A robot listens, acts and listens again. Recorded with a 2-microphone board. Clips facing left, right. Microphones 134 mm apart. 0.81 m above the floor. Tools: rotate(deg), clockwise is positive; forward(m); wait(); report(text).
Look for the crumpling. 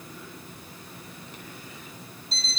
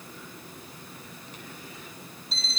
wait()
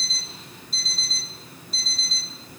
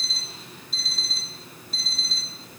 wait()
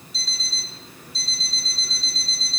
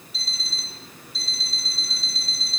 report("I can't make out crumpling, only an alarm clock.")